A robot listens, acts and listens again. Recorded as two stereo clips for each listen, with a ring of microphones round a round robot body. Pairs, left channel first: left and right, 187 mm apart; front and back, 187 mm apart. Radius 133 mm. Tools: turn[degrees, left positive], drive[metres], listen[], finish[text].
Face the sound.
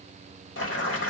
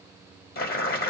Thought: The boiling: 40° left.
Action: turn[40]
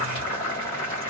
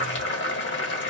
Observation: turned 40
Thought: The boiling is now 20° left.
Action: turn[20]
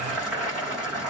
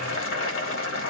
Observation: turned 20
Action: finish[Facing the boiling, 1 to 2 m away.]